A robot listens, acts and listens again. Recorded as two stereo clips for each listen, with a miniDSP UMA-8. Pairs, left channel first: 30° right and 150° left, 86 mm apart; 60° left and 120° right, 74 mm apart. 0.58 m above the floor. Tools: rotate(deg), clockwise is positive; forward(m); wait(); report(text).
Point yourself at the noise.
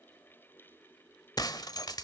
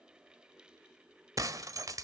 rotate(75)
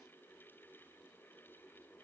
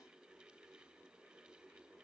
report("Facing where the breaking glass came from. I can't hear it now.")